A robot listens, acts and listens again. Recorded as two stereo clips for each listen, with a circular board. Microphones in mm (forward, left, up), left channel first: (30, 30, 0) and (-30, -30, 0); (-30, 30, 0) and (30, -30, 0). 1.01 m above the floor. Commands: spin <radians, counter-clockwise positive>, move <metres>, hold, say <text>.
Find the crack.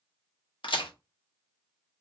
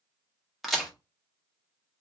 spin 0.79
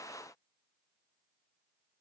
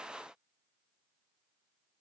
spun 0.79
say Facing where the crack came from. I can't hear it now.